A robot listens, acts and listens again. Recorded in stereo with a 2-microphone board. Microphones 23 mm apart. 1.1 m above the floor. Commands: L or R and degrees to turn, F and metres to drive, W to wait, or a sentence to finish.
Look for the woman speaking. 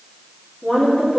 L90
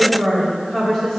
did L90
Found it: a woman speaking, straight ahead.